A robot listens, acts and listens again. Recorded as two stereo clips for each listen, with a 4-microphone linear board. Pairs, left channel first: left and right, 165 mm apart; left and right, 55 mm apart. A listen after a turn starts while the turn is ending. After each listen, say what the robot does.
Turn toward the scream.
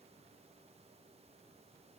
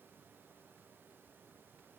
Keep listening.
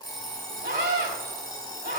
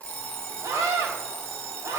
Turn 75° right.
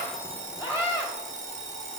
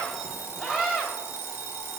Turn 15° right.
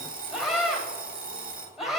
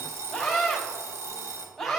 Found it: a scream, straight ahead, 2 to 4 m away.